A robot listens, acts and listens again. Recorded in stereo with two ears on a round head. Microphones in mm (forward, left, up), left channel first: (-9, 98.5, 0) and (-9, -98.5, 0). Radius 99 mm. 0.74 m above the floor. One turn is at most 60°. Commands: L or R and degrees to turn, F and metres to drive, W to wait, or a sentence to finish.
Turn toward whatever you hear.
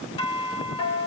L25
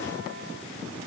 W
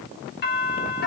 L60
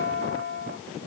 L60
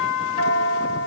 L25
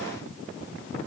W
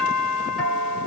Facing the doorbell, over 4 m away.